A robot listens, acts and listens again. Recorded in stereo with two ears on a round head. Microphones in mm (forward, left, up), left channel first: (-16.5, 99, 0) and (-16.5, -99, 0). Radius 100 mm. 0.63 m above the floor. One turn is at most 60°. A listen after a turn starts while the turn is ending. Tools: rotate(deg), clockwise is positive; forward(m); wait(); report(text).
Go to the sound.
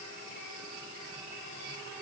wait()
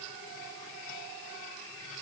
wait()
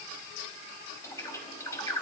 rotate(-30)
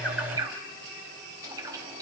rotate(15)
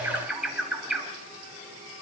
forward(1.0)
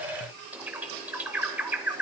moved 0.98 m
forward(1.0)
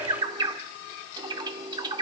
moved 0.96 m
rotate(20)
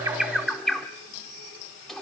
forward(1.0)
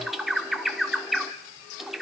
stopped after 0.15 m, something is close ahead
report("I am next to the bird.")